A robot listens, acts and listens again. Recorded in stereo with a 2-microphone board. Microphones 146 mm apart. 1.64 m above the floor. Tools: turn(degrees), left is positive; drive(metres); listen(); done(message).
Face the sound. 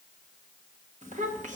turn(degrees=-55)
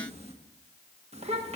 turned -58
turn(degrees=-50)
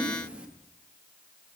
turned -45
turn(degrees=-10)
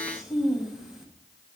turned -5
done("Facing the child speaking, 1 to 2 m away.")